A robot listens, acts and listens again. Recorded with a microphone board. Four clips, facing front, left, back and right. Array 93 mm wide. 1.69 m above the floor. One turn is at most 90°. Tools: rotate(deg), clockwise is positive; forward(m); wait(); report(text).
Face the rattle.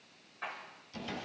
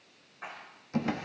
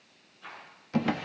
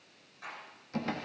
rotate(-30)
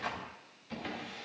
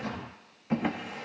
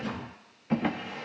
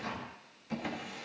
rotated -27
wait()
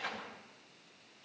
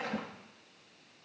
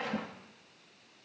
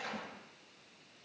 wait()
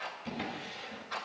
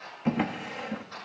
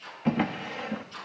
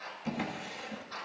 report("Facing the rattle.")